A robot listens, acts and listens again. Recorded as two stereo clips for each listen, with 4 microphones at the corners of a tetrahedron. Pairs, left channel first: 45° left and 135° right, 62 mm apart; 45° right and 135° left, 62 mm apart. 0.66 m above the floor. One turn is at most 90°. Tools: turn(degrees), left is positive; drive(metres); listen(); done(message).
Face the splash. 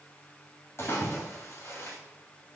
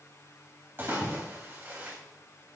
turn(degrees=85)
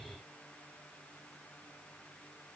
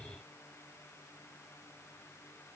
done("I heard a splash from this way, but can't make it out now.")